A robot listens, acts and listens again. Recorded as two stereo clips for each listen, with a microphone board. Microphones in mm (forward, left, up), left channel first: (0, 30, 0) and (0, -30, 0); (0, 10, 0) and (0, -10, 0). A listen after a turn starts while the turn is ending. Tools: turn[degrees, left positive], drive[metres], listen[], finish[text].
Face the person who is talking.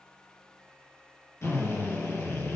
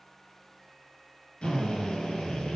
Action: listen[]
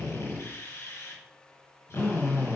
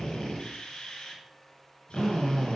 Action: listen[]
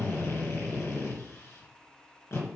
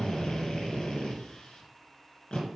Action: finish[I can't make out anyone speaking, only a drill.]